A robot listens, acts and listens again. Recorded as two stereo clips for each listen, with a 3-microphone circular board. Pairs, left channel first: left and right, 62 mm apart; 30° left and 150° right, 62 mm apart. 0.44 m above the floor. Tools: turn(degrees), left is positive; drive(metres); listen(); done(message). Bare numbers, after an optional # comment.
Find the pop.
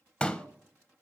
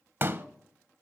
# The pop: 160° left.
turn(160)
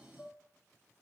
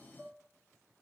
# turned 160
done("Facing where the pop came from. I can't hear it now.")